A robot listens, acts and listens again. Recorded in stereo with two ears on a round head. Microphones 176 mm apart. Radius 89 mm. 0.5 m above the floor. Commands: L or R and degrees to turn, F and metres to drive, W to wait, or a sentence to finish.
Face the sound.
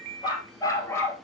L30
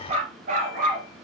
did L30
R50
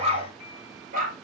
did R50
R45
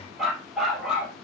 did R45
Facing the dog barking, 2 to 4 m away.